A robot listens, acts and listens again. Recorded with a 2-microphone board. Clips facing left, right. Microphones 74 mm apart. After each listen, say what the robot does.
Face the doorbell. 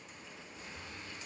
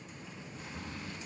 Keep listening.
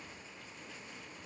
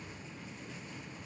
Keep listening.
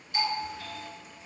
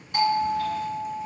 Turn 50° right.
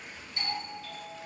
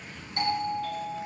Turn 65° right.
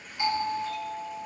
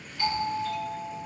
Turn 20° left.
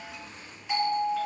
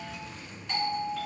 Found it: a doorbell, straight ahead, 1 to 2 m away.